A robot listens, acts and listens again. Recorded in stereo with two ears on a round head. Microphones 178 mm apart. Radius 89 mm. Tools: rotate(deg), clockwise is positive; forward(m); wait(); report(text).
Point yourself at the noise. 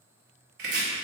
rotate(55)
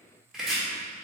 report("Found it: chopping, straight ahead, 1 to 2 m away.")